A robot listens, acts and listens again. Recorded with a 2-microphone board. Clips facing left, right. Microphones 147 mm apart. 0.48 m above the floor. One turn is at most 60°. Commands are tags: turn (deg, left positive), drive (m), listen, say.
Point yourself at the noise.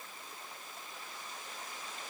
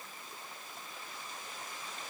<listen/>
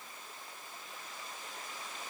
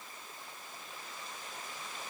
<listen/>
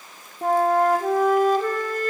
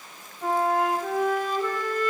<turn deg="50"/>
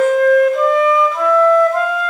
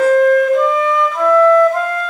<say>Facing the flute, under 1 m away.</say>